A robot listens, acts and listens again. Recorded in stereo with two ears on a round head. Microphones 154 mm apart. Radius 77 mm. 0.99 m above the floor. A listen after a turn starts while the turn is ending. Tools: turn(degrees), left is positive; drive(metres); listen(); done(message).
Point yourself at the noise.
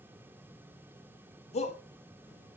turn(degrees=40)
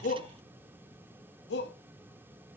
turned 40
turn(degrees=95)
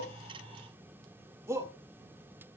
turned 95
turn(degrees=-15)
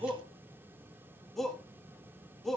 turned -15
done("Found it: a shout, straight ahead.")